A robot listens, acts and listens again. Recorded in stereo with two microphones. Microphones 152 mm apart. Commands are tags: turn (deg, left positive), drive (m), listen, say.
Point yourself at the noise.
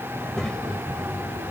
<turn deg="30"/>
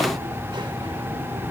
<turn deg="-40"/>
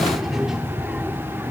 <turn deg="-15"/>
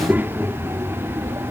<turn deg="-35"/>
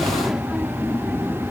<say>Found it: a child speaking, straight ahead.</say>